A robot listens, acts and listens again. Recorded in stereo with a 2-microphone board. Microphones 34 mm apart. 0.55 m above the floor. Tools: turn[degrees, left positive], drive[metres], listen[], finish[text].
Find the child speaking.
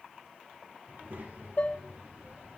Thought: The child speaking: about 65° right or 115° right.
Action: turn[-65]
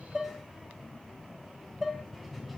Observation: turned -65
Action: finish[Facing the child speaking, 1 to 2 m away.]